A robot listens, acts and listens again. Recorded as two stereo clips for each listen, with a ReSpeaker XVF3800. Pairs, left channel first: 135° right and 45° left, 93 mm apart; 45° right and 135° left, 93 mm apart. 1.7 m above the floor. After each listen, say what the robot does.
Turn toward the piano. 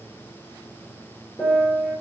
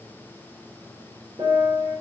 Turn 150° left.
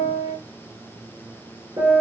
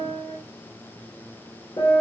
Facing the piano, over 4 m away.